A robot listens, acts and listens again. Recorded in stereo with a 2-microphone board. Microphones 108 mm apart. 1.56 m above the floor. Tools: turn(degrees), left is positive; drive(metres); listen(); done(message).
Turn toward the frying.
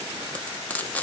turn(degrees=30)
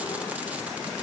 listen()
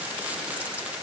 listen()
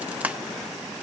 turn(degrees=-15)
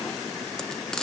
done("Found it: frying, straight ahead.")